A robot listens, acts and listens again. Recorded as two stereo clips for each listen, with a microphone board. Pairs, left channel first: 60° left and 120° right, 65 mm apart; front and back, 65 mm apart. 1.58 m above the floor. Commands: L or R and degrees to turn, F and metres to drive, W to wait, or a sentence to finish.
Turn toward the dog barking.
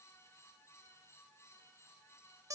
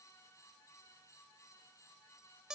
W
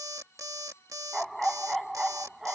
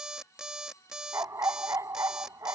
L155
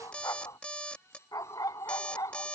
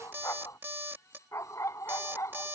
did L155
L40
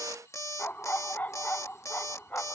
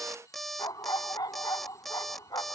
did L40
Facing the dog barking.